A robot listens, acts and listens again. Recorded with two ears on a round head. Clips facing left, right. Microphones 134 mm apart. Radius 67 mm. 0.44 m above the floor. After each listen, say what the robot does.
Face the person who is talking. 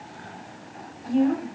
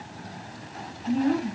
Turn 40° left.
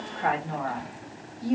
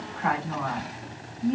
Turn 95° left.
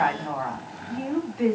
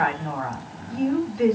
Found it: a woman speaking, straight ahead.